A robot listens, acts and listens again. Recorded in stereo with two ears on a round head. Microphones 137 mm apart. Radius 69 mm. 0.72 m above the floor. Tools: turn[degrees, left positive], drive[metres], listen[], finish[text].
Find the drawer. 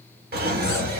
Thought: The drawer: about 70° right or 110° right.
Action: turn[-70]
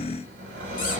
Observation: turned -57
Thought: So it is at 50° right.
Action: turn[-50]
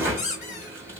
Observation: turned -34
Thought: The drawer is now 15° right.
Action: turn[-15]
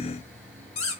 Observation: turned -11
Action: listen[]
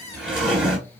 Action: finish[Found it: a drawer, straight ahead.]